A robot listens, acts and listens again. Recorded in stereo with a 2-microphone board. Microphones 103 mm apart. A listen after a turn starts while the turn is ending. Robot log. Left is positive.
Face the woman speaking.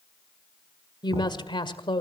note: The woman speaking: about 55° left or 125° left.
cmd yaw +55
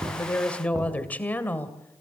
note: So it is at 20° left.
cmd yaw +20
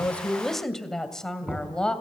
note: The woman speaking is now 10° left.
cmd yaw +10
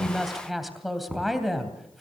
end: Found it: a woman speaking, straight ahead.